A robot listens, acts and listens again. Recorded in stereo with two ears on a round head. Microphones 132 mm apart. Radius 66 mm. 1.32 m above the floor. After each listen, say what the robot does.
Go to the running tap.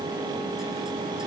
Keep listening.
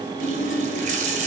Turn 55° right.
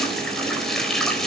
Drive 1.0 m forward.
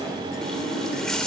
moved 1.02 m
Drive 1.0 m forward.
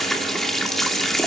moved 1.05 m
Drive 1.0 m forward.
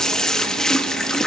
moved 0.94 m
Drive 1.0 m forward.
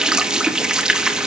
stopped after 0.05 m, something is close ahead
I am next to the running tap.